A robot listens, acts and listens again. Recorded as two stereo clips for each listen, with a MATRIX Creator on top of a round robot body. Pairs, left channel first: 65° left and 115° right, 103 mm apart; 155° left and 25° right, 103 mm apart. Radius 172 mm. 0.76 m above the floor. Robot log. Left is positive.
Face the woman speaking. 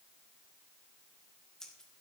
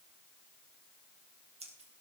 cmd idle
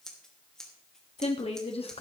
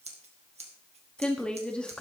note: The woman speaking: 75° left.
cmd yaw +75
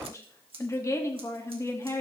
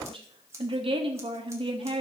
note: The woman speaking is now 10° left.
cmd yaw +10
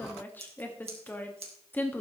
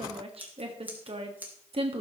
end: Found it: a woman speaking, straight ahead, 1 to 2 m away.